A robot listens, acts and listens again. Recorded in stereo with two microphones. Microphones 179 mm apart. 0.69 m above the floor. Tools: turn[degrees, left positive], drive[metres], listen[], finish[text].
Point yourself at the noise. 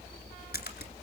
Thought: The splash: about 70° left or 110° left.
Action: turn[70]
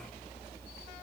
Action: listen[]
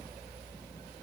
Action: finish[I heard a splash, but can't make it out now. It was about straight ahead or 40° left.]